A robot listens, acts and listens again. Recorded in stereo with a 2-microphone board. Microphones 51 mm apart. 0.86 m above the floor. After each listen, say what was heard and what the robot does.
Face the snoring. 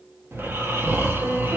The snoring: about 50° right or 130° right. Turn 50° right.
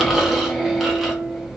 Found it: snoring, straight ahead.